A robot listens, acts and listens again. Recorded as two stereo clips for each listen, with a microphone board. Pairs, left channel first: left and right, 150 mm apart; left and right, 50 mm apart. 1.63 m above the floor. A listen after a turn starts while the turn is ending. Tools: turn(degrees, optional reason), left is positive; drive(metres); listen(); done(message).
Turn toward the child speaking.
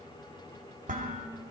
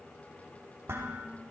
listen()
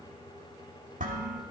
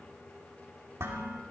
listen()
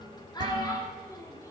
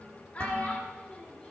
turn(degrees=25, reason="The child speaking: about 25° left or 155° left.")
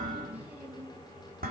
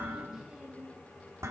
listen()
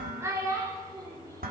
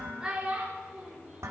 turn(degrees=-25, reason="So it is at 25° right.")
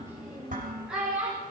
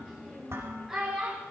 done("Found it: a child speaking, straight ahead.")